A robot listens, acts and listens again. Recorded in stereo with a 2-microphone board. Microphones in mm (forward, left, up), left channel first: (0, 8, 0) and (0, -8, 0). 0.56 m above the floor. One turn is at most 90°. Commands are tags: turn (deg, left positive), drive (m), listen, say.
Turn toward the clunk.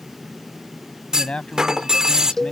<turn deg="-45"/>
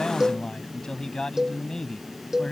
<listen/>
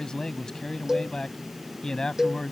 <say>I heard a clunk, but can't make it out now. It was about straight ahead or 90° right.</say>